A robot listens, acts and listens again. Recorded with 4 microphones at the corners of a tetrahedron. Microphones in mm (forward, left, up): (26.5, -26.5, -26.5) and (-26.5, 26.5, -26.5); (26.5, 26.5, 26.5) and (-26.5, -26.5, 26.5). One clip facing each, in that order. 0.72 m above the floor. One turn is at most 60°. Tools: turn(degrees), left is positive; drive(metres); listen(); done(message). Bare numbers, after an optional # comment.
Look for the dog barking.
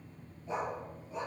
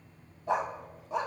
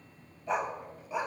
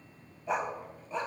# The dog barking: 125° left.
turn(60)
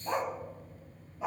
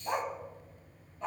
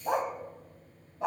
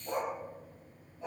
# The dog barking is now 35° left.
turn(35)
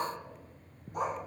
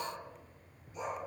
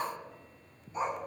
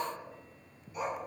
# The dog barking is now 15° right.
turn(-15)
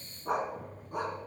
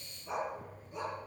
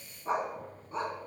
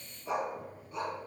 # The dog barking is now 10° right.
turn(-10)
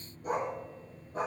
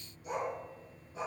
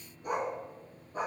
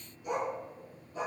done("Facing the dog barking, 2 to 4 m away.")